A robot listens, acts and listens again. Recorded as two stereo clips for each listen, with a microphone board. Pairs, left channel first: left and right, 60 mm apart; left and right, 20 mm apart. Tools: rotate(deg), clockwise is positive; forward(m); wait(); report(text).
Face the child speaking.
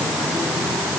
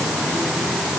wait()
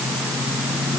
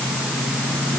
wait()
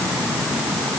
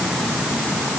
report("I can't make out a child speaking.")